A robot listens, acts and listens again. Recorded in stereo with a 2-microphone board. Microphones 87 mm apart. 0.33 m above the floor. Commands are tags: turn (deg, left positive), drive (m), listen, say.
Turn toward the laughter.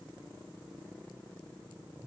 <listen/>
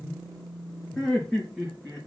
<turn deg="30"/>
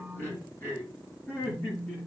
<turn deg="155"/>
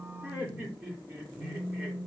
<turn deg="-20"/>
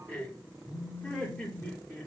<say>Facing the laughter, over 4 m away.</say>